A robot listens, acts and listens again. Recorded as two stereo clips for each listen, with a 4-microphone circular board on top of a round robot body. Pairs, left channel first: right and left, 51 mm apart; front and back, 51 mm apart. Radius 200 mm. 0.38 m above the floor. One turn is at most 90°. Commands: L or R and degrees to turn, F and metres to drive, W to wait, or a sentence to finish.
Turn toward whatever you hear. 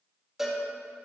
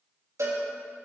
L90
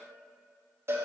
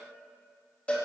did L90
L60
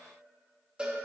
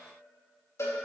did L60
L20
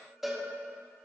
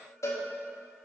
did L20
Found it: a cowbell, straight ahead.